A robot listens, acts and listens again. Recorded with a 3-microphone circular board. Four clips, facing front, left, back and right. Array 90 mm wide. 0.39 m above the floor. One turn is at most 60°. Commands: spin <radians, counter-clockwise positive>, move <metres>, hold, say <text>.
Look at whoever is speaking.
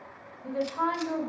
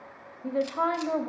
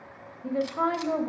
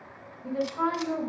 spin 1.05
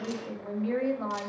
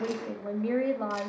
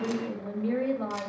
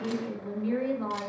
spin 1.05
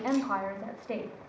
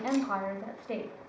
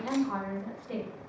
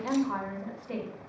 spin 0.70
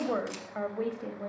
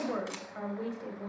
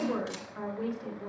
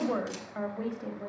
spin -0.35
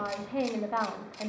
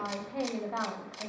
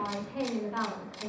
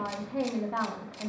say Facing the woman speaking.